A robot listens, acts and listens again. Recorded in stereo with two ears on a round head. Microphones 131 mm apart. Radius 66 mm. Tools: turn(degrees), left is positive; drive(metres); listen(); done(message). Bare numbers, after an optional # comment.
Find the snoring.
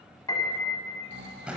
turn(-90)
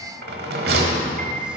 listen()
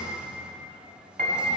listen()
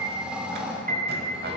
# The snoring is now 10° right.
turn(-10)
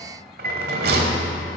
listen()
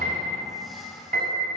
listen()
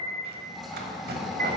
done("Found it: snoring, straight ahead, under 1 m away.")